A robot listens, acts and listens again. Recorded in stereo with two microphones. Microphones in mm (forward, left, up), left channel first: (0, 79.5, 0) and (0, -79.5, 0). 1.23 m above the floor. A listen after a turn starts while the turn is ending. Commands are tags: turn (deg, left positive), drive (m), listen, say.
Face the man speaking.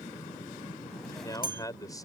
<turn deg="25"/>
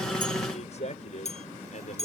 <turn deg="130"/>
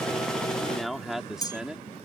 <say>Found it: a man speaking, straight ahead.</say>